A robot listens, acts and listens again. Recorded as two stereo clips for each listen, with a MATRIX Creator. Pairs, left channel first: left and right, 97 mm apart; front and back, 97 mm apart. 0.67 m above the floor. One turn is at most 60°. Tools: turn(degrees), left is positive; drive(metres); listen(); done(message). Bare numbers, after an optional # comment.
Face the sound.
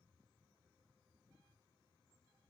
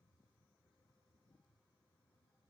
listen()
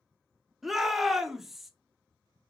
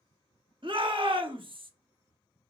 # The shout: straight behind.
turn(60)
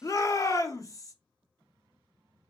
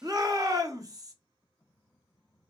# The shout is now 135° left.
turn(60)
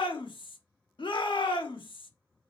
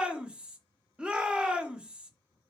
# The shout is now 100° left.
turn(60)
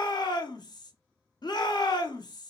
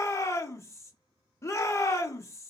# The shout is now 55° left.
turn(55)
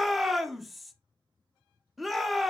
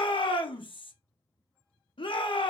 done("Facing the shout.")